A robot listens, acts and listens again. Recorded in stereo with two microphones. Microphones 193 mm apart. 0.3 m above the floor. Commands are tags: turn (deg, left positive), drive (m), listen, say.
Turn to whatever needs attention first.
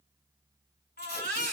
<turn deg="60"/>
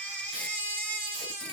<turn deg="10"/>
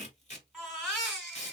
<say>Found it: a baby crying, straight ahead, 1 to 2 m away.</say>